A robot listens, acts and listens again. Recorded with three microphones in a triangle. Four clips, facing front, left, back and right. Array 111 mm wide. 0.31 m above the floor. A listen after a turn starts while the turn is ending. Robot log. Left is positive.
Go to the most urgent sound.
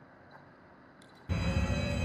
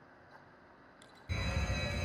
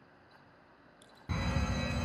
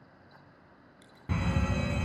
note: The fire alarm: 110° right.
cmd yaw -110
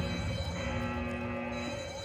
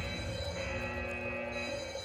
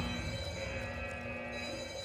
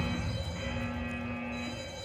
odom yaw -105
cmd fwd 1.0
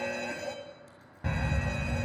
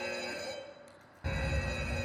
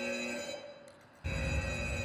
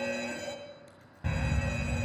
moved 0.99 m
note: The fire alarm is now 10° right.
cmd yaw -10
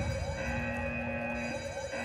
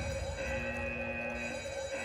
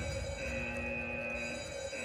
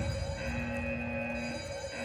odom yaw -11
cmd fwd 1.0
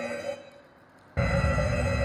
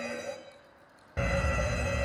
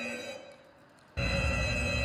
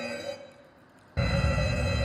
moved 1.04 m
cmd fwd 1.0
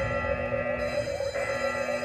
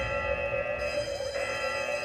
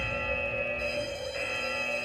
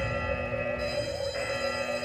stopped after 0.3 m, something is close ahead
end: Arrived at the fire alarm, straight ahead.